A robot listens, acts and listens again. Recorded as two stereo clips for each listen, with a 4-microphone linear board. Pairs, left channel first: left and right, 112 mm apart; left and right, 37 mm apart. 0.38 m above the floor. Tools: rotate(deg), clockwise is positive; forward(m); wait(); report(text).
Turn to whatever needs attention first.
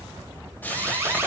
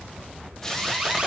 rotate(20)
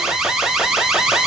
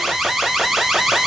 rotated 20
report("Found it: an alarm, straight ahead, 1 to 2 m away.")